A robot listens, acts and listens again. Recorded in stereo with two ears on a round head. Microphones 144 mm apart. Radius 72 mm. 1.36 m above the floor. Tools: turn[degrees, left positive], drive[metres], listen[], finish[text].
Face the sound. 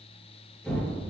Action: turn[30]
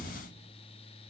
Thought: So it is at 145° left.
Action: turn[145]
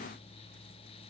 Action: finish[Facing where the explosion came from. I can't hear it now.]